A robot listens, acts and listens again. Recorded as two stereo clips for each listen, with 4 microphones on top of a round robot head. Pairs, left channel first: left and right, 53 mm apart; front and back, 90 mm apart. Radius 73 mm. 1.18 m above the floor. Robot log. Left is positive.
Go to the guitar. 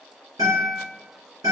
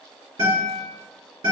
note: The guitar: 130° right.
cmd yaw -130
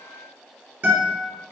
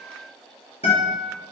note: The guitar is now 40° right.
cmd yaw -40
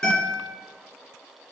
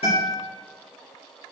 note: The guitar is now 10° left.
cmd yaw +10
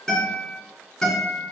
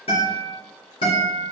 cmd fwd 1.0
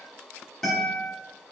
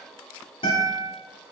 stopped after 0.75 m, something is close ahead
note: The guitar is now 10° left.
cmd yaw +10
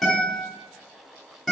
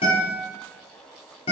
end: I am next to the guitar.